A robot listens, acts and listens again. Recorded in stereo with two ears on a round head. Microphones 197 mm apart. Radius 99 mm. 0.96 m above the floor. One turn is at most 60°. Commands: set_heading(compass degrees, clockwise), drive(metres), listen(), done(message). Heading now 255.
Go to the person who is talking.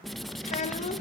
set_heading(220)
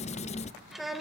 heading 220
drive(1.0)
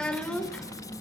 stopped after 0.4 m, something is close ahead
done("Something is in my way. I am facing the child speaking but have not reached it.")